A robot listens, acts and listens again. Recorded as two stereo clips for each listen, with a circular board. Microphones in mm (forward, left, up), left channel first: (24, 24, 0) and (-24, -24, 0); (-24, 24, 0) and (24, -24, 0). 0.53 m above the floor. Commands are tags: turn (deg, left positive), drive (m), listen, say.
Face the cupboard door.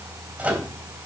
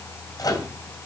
<listen/>
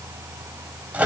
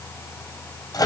<listen/>
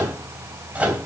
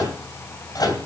<say>I can't make out a cupboard door to turn to.</say>